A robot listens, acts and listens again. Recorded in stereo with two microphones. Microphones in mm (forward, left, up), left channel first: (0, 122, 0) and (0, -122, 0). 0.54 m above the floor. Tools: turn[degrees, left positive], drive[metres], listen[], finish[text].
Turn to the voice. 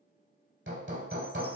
Action: listen[]
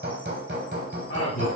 Thought: The man speaking: about 60° left or 120° left.
Action: turn[60]
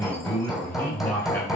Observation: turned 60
Thought: So it is at 10° left.
Action: turn[10]
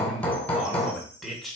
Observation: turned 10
Action: finish[Facing the man speaking, 1 to 2 m away.]